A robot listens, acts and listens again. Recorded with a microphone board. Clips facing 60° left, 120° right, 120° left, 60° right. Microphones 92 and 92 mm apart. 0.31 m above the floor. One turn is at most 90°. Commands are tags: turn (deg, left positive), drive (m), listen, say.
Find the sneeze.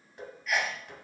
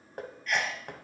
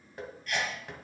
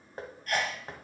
<turn deg="-25"/>
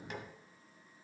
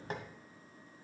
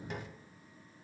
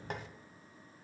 <say>Facing where the sneeze came from. I can't hear it now.</say>